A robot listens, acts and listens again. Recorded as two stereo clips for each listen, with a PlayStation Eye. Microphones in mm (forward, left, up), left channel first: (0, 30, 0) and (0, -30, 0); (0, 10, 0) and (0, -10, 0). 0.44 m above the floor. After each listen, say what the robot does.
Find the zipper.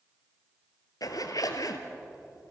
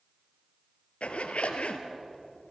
Turn 90° left.
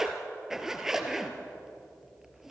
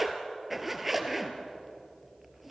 Turn 10° right.
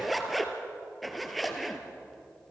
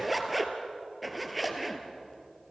Facing the zipper, 2 to 4 m away.